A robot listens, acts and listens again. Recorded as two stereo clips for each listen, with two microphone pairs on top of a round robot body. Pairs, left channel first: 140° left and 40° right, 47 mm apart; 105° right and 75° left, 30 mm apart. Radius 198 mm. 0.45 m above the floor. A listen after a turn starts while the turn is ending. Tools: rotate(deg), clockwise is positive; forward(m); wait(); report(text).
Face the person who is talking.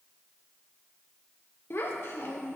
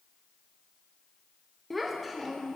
rotate(-170)
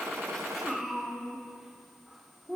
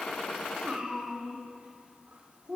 rotate(-40)
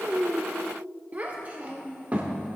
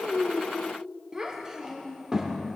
rotate(-10)
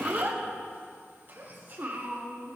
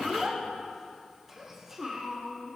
report("Found it: a child speaking, straight ahead.")